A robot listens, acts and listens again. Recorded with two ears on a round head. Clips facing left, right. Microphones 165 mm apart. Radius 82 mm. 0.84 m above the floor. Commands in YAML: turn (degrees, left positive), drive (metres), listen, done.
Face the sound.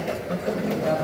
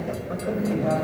turn: 30
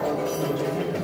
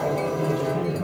turn: 10
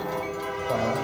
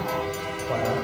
turn: 10
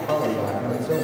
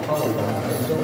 turn: 10
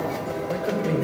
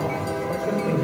turn: 15
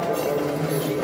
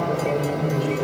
turn: 15
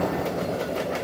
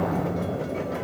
done: "Found it: a man speaking, straight ahead, 2 to 4 m away."